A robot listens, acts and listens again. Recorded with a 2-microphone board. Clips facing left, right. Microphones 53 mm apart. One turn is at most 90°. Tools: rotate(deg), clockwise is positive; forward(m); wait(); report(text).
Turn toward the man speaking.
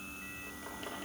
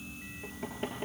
wait()
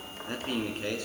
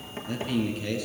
rotate(-40)
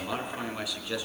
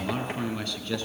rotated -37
rotate(-10)
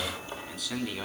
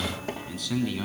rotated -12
report("Found it: a man speaking, straight ahead.")